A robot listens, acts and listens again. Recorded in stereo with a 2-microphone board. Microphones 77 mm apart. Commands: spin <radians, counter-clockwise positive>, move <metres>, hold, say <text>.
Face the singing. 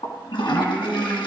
spin 0.52
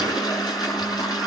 hold
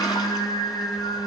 spin 2.18
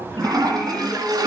say Found it: singing, straight ahead, over 4 m away.